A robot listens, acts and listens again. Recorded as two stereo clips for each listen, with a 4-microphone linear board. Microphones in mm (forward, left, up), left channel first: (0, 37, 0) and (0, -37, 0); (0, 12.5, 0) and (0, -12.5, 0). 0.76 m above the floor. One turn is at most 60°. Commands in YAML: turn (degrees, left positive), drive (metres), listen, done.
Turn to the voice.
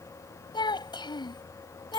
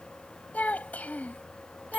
turn: 60
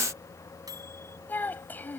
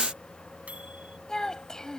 turn: 25
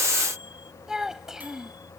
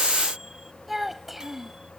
done: "Facing the child speaking."